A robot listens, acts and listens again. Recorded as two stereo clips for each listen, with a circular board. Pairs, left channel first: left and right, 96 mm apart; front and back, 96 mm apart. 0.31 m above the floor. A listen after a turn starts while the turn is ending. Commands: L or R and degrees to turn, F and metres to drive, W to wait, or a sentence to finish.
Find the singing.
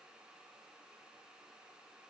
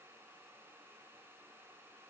W
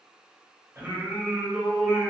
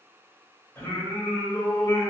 Facing the singing.